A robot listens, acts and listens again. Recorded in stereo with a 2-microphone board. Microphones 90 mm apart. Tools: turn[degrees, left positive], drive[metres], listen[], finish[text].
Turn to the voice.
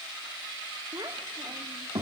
Thought: The child speaking: about 45° right or 135° right.
Action: turn[-45]
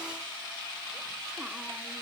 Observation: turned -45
Action: listen[]
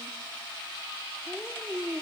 Action: finish[Facing the child speaking.]